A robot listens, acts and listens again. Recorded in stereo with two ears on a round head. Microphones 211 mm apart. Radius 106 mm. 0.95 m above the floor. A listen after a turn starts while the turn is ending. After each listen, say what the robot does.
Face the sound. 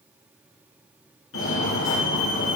Turn 60° left.
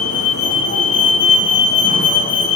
Turn 45° left.
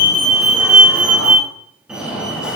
Found it: a fire alarm, straight ahead.